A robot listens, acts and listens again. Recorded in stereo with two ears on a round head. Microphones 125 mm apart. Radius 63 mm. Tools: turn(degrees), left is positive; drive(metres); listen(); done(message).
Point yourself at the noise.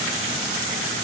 listen()
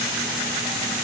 listen()
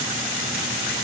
done("I can't make out anything to turn to.")